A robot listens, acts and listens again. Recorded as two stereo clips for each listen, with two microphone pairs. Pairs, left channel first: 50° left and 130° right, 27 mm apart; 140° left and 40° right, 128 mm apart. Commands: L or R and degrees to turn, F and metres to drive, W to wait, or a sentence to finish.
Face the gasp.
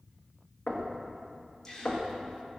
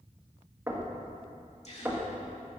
L115
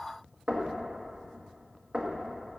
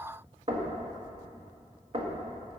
Facing where the gasp came from. I can't hear it now.